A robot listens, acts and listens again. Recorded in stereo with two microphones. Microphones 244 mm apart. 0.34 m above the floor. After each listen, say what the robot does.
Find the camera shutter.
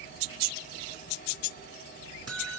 Keep listening.
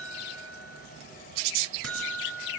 Keep listening.
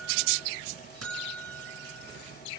I can't make out a camera shutter, only a buzzer.